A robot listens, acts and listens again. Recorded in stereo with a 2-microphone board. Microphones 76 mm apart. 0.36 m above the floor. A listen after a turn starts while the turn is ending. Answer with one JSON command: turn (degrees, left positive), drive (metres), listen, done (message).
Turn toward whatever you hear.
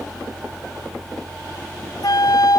{"turn": 65}
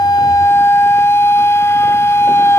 {"turn": 40}
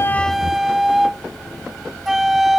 {"done": "Found it: a flute, straight ahead."}